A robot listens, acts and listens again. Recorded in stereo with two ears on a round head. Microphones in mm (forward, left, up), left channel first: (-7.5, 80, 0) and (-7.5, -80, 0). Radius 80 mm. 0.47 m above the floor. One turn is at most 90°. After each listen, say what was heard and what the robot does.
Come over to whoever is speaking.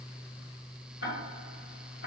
Keep listening.
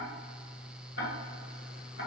Keep listening.
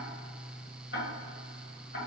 I can't make out anyone speaking to turn to.